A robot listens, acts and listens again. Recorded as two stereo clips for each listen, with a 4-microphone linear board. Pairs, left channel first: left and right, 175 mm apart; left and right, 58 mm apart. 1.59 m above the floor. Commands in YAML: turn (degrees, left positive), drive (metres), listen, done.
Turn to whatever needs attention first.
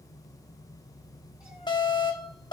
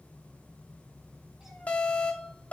turn: 25
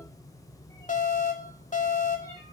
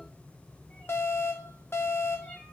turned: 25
turn: 130
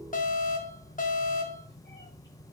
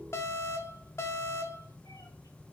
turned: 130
turn: 55
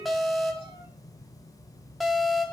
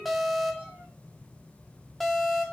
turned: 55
done: "Found it: an alarm, straight ahead."